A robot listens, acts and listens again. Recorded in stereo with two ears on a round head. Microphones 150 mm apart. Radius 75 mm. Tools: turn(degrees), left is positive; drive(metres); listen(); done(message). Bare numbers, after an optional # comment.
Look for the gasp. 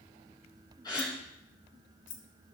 # The gasp: about 25° left or 155° left.
turn(25)
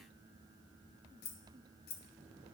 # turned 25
listen()
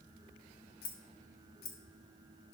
done("I heard a gasp, but can't make it out now. It was about straight ahead or 130° left.")